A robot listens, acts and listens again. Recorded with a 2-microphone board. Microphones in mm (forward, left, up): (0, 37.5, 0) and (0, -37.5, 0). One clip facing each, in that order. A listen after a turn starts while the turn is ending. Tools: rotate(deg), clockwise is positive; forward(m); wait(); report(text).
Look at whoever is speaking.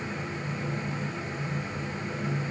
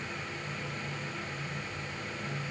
wait()
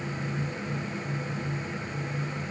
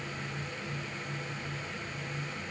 wait()
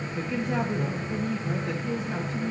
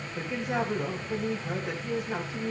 rotate(30)
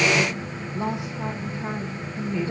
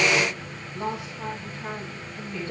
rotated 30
rotate(-15)
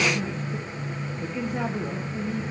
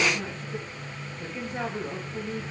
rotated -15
report("Facing the woman speaking, 2 to 4 m away.")